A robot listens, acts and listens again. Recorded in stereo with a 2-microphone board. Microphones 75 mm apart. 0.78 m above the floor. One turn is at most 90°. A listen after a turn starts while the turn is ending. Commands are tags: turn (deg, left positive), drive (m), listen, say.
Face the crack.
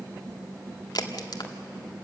<turn deg="70"/>
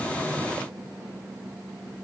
<listen/>
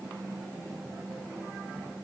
<say>I heard a crack, but can't make it out now. It was about straight ahead or 40° left.</say>